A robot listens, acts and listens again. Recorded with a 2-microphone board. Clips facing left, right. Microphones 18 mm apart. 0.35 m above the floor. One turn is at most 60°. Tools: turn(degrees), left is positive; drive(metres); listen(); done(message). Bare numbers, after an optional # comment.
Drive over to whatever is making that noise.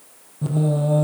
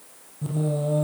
# The singing: about 25° left or 155° left.
turn(25)
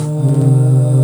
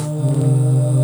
drive(1.0)
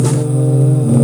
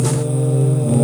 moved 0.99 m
drive(1.0)
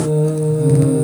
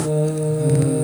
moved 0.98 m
drive(1.0)
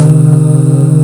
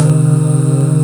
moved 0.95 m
drive(1.0)
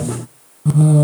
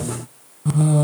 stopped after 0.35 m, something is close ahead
done("Arrived at the singing, straight ahead.")